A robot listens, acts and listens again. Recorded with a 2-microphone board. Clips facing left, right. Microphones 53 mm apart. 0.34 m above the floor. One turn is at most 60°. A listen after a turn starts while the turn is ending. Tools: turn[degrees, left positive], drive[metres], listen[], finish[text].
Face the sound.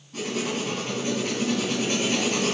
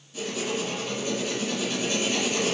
Thought: The writing: about 60° left or 120° left.
Action: turn[60]
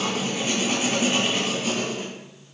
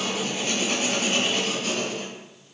Thought: So it is at 10° left.
Action: turn[10]
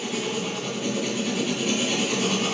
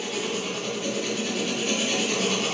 Action: finish[Facing the writing, 2 to 4 m away.]